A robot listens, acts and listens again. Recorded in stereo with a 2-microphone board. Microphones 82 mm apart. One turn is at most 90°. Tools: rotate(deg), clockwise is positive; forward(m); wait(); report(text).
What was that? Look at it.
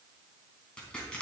rotate(-30)
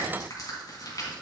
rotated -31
rotate(-90)
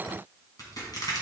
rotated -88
rotate(-50)
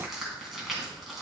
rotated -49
report("Facing the crushing.")